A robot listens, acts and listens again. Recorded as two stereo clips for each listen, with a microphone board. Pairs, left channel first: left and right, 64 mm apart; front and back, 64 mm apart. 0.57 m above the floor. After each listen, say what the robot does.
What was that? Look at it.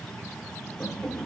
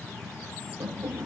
Turn 160° left.
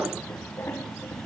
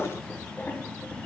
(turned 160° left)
Keep listening.
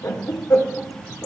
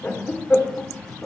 Turn 55° left.
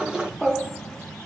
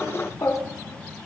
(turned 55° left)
Facing the laughter, 1 to 2 m away.